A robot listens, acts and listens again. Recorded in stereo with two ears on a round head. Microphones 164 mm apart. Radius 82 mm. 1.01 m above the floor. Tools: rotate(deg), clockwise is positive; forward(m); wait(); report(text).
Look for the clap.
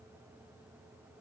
wait()
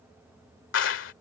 rotate(-75)
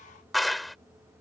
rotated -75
report("Found it: a clap, straight ahead.")